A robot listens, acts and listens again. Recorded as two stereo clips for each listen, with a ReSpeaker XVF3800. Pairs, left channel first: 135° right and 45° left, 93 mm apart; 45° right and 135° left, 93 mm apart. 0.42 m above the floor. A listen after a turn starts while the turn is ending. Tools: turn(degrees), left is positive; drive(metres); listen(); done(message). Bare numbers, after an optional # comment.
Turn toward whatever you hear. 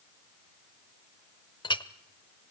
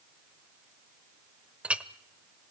# The clink: 150° right.
turn(-150)
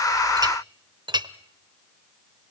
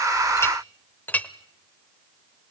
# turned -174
# The clink is now 25° left.
turn(25)
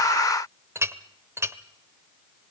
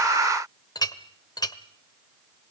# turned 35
# The clink is now 10° right.
turn(-10)
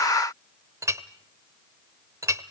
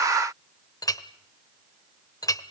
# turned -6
done("Found it: a clink, straight ahead.")